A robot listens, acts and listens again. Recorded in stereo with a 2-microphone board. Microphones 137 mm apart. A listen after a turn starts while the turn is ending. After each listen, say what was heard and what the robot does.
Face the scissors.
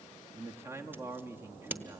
The scissors: about 15° right or 165° right. Turn 15° right.
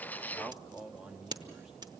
So it is at 150° right. Turn 150° right.
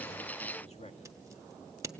The scissors is now 20° right. Turn 20° right.
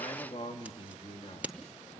The scissors is now 10° right. Turn 10° right.
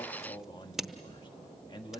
Found it: scissors, straight ahead.